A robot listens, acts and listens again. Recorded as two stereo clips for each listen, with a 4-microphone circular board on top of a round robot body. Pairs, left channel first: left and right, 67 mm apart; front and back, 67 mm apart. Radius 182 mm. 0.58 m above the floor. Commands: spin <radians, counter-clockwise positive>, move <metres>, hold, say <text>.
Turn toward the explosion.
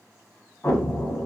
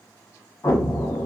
spin 0.61
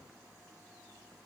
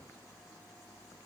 say I heard an explosion from this way, but can't make it out now.